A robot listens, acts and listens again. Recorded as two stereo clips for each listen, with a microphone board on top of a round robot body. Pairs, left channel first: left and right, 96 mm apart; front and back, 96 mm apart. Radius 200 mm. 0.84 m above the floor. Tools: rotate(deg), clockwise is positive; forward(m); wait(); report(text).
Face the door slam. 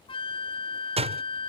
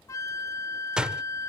rotate(100)
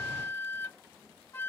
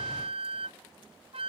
report("Facing where the door slam came from. I can't hear it now.")